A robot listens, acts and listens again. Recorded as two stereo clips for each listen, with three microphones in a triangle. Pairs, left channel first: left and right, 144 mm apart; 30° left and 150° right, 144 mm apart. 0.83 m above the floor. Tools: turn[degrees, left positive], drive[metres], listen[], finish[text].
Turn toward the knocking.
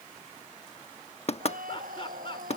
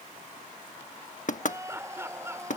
Thought: The knocking: 50° left.
Action: turn[50]
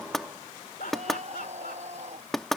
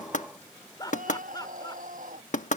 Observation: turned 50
Action: finish[Facing the knocking.]